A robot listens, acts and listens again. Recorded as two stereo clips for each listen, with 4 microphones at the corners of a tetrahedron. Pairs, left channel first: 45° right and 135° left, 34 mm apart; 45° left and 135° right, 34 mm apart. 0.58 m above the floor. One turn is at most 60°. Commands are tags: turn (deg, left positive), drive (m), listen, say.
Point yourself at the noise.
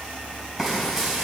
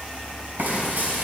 <turn deg="-60"/>
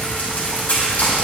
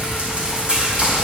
<turn deg="-60"/>
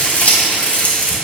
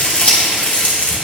<say>Facing the frying, 2 to 4 m away.</say>